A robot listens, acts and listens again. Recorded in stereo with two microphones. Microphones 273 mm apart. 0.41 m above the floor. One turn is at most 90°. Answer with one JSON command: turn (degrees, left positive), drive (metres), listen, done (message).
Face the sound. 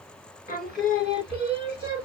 {"turn": 40}
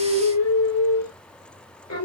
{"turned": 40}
{"turn": 90}
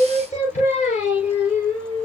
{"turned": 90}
{"turn": 25}
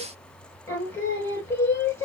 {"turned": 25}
{"turn": 10}
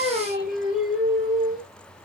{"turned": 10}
{"done": "Facing the singing, 2 to 4 m away."}